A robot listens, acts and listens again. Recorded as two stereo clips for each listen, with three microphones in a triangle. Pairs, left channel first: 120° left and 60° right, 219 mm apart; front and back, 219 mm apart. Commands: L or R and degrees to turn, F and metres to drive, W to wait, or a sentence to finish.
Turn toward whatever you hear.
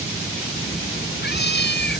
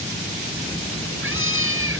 L160
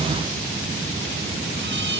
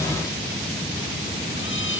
W
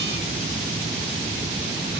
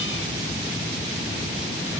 W
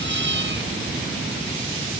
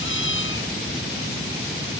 R25
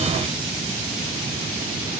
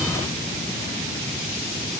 W
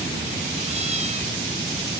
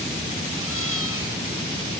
W
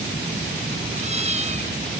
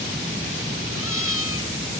Found it: a cat meowing, straight ahead.